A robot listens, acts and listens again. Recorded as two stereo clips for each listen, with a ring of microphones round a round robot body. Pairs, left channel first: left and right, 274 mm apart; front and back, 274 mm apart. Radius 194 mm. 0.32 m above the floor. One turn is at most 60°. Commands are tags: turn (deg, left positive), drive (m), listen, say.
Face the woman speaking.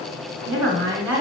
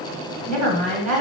<turn deg="-60"/>
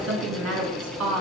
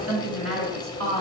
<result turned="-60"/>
<turn deg="-60"/>
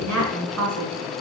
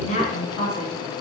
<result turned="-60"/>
<turn deg="-60"/>
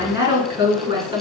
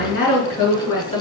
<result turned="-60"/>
<turn deg="-20"/>
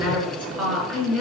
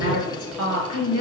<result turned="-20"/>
<say>Found it: a woman speaking, straight ahead.</say>